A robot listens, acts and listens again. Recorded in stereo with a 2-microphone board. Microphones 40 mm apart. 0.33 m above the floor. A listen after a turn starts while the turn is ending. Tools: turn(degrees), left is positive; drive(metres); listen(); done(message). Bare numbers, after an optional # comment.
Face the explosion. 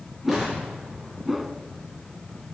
turn(-30)
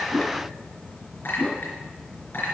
listen()
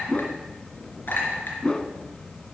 done("I heard an explosion, but can't make it out now. It was about 25° left or 145° right.")